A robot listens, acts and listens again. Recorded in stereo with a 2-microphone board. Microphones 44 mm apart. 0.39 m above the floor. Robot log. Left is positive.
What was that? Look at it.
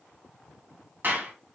note: The clap: about 50° right or 130° right.
cmd yaw -50
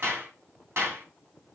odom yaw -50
note: So it is at 75° right.
cmd yaw -75
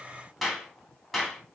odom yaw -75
end: Found it: a clap, straight ahead.